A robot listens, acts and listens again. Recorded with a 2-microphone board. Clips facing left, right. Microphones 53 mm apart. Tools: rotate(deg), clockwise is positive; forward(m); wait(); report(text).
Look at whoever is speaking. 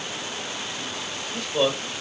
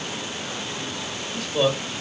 rotate(-30)
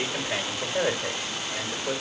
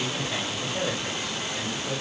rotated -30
rotate(-145)
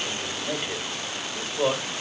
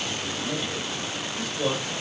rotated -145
rotate(-35)
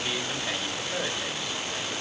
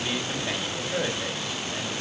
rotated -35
rotate(10)
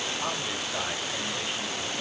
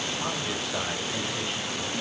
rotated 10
report("Found it: a man speaking, straight ahead.")